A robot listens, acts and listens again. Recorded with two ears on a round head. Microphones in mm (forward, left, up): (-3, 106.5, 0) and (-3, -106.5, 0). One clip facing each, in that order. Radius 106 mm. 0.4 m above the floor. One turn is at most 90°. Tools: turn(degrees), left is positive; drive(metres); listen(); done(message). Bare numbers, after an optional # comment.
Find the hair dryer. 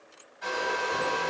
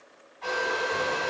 # The hair dryer: about 35° left or 145° left.
turn(35)
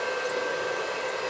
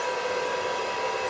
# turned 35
done("Facing the hair dryer.")